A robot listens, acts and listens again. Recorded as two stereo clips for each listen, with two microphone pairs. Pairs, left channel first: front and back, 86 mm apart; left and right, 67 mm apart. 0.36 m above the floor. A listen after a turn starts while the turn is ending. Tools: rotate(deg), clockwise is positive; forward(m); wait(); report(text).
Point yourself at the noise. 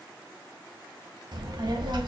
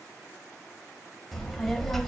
rotate(-175)
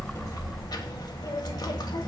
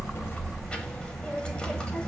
rotate(-20)
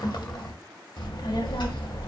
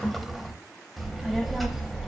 report("Facing the child speaking.")